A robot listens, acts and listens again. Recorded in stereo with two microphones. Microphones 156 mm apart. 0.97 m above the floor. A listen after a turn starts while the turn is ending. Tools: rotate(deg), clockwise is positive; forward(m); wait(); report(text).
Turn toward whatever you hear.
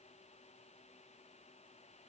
wait()
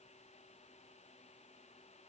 wait()
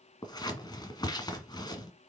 rotate(-25)
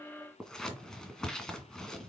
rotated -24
report("Found it: scissors, straight ahead, 1 to 2 m away.")